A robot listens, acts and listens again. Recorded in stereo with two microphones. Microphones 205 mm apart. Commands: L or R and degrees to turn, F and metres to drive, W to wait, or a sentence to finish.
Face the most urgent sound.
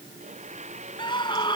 L20
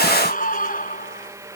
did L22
L135
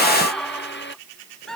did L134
Found it: a scream, straight ahead.